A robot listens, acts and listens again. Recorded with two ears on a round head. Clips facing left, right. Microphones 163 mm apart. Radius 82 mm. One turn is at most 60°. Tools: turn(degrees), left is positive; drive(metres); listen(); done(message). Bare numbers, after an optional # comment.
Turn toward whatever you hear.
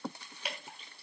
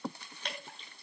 turn(30)
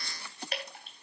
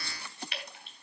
# So it is at 140° left.
turn(60)
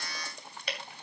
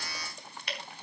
# The dripping is now 100° left.
turn(60)
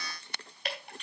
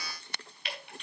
# The dripping is now 35° left.
turn(35)
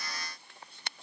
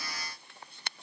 # The dripping is now 15° left.
turn(15)
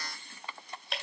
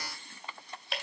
done("Found it: dripping, straight ahead.")